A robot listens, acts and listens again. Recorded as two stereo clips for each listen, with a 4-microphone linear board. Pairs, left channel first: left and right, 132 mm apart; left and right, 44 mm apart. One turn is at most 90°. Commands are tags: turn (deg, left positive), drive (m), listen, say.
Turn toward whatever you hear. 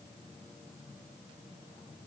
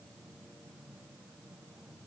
<listen/>
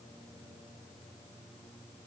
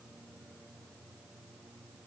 <listen/>
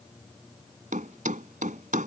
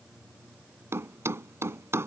<turn deg="-90"/>
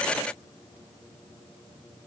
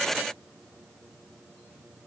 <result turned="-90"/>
<say>Facing where the thud came from. I can't hear it now.</say>